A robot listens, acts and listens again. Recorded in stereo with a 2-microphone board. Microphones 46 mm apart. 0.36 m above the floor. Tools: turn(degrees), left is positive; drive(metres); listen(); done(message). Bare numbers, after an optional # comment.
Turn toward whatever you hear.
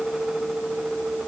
listen()
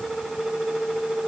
listen()
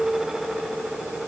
done("I can't make out anything to turn to.")